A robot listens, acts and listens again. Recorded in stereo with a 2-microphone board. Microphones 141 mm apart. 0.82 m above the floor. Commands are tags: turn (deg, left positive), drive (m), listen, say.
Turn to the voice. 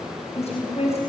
<turn deg="45"/>
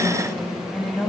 <say>Facing the woman speaking, over 4 m away.</say>